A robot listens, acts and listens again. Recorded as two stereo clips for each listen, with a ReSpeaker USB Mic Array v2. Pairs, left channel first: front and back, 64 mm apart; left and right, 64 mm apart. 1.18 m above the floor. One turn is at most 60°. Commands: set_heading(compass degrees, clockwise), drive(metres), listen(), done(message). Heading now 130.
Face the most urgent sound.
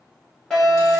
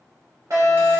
set_heading(190)
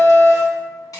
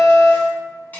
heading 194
set_heading(214)
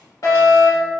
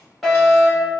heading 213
done("Facing the fire alarm, 2 to 4 m away.")